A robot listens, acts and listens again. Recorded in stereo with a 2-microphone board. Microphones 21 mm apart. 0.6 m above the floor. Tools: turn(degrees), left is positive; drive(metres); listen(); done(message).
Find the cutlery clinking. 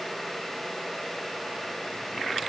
listen()
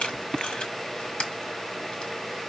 listen()
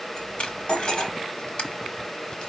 turn(degrees=50)
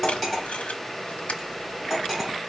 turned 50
done("Found it: cutlery clinking, straight ahead.")